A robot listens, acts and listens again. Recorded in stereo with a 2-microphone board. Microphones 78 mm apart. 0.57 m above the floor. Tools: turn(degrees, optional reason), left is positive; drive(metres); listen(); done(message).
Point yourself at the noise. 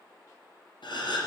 turn(degrees=90)
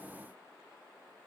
done("Facing where the gasp came from. I can't hear it now.")